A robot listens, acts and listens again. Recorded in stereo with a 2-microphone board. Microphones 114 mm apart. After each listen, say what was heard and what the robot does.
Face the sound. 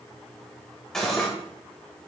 Turn 30° left.
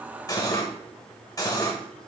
So it is at 145° left. Turn 145° left.
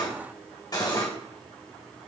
The cutlery clinking is now 35° left. Turn 35° left.
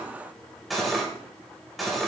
Facing the cutlery clinking.